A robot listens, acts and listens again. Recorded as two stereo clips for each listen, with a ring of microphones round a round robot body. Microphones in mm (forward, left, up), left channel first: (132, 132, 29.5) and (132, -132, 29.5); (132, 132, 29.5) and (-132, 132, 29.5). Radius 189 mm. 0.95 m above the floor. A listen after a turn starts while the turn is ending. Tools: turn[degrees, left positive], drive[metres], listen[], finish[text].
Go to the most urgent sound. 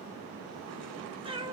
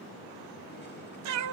Action: listen[]
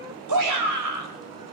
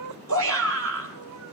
Thought: The shout: 125° right.
Action: turn[-125]
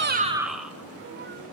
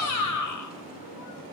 Action: drive[1.0]
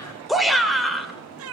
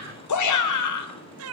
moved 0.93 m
Action: drive[1.0]
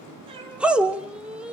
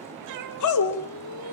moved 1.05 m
Action: drive[1.0]
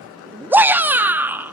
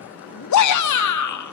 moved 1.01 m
Action: drive[1.0]
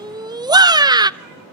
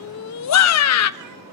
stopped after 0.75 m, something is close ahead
Thought: The shout is now 15° right.
Action: turn[-15]
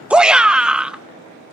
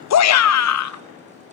Action: finish[I am next to the shout.]